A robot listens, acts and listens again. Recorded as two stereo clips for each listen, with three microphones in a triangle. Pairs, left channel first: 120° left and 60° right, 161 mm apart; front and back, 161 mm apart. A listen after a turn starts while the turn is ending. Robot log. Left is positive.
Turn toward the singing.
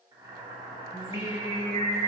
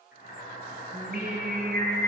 note: The singing: 175° left.
cmd yaw +175
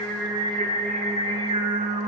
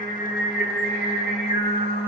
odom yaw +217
note: The singing is now 10° left.
cmd yaw +10
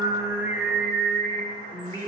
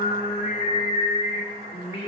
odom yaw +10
note: The singing is now 55° left.
cmd yaw +55
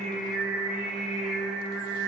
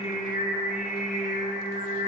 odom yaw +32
note: The singing is now 25° left.
cmd yaw +25
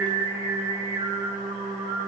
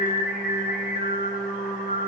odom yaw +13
note: The singing is now 15° left.
cmd yaw +15
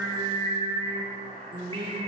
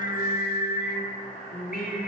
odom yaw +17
end: Found it: singing, straight ahead, 1 to 2 m away.